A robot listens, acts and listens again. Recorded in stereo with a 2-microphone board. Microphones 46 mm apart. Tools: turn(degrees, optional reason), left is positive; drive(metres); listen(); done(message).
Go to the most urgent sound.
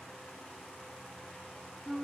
listen()
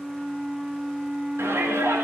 turn(degrees=-75, reason="The shout: about 75° right or 105° right.")
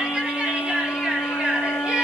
turn(degrees=-25, reason="So it is at 25° right.")
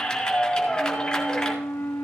turn(degrees=15, reason="The shout is now 15° left.")
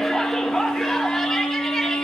drive(metres=1.0)
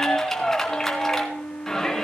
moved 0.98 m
turn(degrees=10, reason="The shout is now 10° left.")
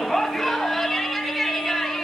drive(metres=1.0)
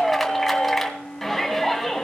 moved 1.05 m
drive(metres=1.0)
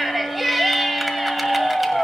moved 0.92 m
drive(metres=1.0)
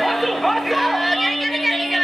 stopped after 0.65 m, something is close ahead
done("Arrived at the shout, straight ahead.")